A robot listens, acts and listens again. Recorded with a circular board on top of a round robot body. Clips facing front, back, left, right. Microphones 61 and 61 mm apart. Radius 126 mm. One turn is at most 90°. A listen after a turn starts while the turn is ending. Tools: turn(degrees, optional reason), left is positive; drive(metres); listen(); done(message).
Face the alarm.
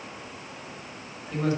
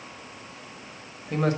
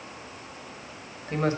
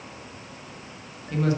listen()
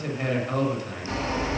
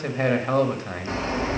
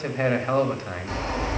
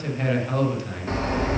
turn(degrees=-90, reason="The alarm: 130° right.")
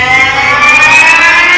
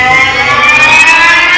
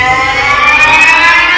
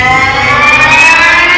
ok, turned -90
turn(degrees=-55, reason="The alarm is now 55° right.")
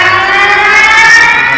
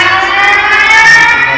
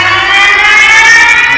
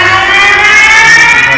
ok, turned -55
turn(degrees=-15, reason="The alarm is now 15° right.")
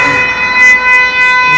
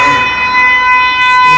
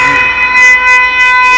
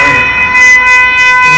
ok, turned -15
done("Found it: an alarm, straight ahead, 2 to 4 m away.")